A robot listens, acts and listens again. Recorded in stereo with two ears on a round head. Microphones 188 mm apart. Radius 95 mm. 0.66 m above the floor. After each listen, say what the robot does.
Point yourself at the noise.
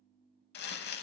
Turn 50° left.
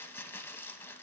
Turn 15° left.
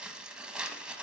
Found it: crumpling, straight ahead, under 1 m away.